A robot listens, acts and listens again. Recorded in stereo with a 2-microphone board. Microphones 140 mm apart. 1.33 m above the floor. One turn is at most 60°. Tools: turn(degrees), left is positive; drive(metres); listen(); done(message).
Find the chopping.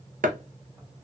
turn(degrees=-60)
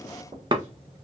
turn(degrees=-35)
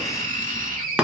turn(degrees=-10)
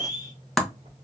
done("Facing the chopping, under 1 m away.")